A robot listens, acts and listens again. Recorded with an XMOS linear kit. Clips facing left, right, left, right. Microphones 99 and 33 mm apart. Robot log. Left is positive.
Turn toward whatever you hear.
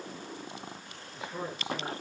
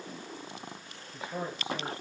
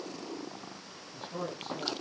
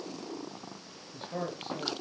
note: The man speaking: about 40° right or 140° right.
cmd yaw -40
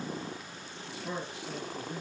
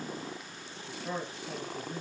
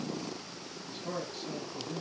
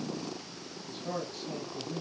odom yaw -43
end: Facing the man speaking, over 4 m away.